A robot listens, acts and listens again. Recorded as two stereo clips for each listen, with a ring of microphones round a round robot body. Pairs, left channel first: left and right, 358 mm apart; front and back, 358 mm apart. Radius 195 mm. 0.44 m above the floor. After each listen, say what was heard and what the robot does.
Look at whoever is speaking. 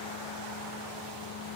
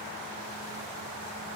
Keep listening.
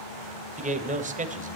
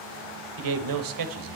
The man speaking: 160° right. Turn 160° right.
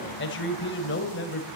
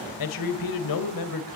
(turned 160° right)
The man speaking is now 30° left. Turn 30° left.
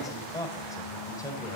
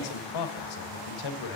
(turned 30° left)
The man speaking is now 10° left. Turn 10° left.
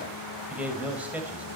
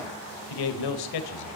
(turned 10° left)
Facing the man speaking, 1 to 2 m away.